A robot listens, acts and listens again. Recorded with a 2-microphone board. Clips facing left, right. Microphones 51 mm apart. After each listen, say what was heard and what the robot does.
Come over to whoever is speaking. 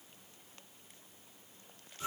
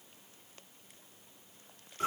Keep listening.
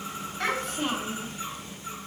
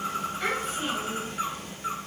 The child speaking: about 70° left or 110° left. Turn 70° left.
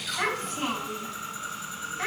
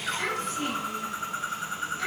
So it is at 40° left. Turn 40° left.
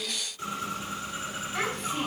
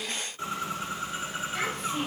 The child speaking is now 10° left. Turn 10° left.
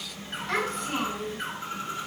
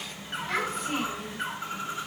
Drive 1.0 m forward.
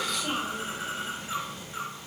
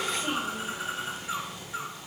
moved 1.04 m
Drive 1.0 m forward.
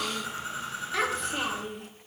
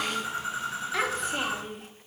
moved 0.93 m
Drive 1.0 m forward.
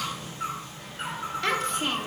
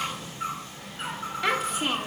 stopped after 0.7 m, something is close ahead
I am next to the child speaking.